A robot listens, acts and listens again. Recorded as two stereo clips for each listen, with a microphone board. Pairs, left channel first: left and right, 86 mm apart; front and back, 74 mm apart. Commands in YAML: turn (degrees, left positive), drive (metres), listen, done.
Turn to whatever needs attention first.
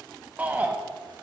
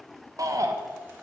turn: -155
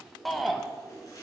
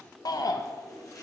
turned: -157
done: "Facing the shout."